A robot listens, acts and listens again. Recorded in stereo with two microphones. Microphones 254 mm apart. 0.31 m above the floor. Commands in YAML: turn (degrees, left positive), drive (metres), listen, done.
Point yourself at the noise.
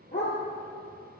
turn: 45
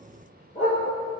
turn: 30
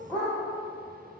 turn: 10
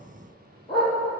turn: 20
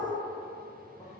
listen: true
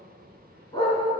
turn: 15
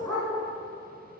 done: "Facing the dog barking."